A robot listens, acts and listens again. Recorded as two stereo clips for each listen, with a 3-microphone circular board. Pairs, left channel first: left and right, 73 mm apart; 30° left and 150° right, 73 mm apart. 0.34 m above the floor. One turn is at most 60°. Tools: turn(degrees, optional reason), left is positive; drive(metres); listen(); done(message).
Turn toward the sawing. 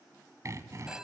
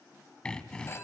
turn(degrees=-45, reason="The sawing: 45° right.")
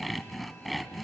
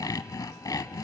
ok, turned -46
done("Facing the sawing, under 1 m away.")